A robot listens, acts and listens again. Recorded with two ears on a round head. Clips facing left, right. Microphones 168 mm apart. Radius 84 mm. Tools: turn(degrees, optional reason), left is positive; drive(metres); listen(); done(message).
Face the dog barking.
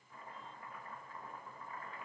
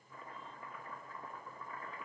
listen()
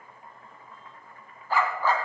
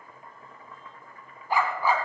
turn(degrees=-30)
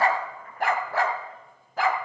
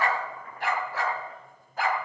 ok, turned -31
turn(degrees=60, reason="So it is at 60° left.")
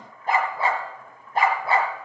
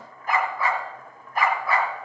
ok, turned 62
turn(degrees=25, reason="The dog barking is now 25° left.")
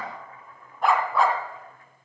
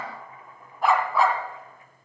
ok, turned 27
done("Found it: a dog barking, straight ahead, 1 to 2 m away.")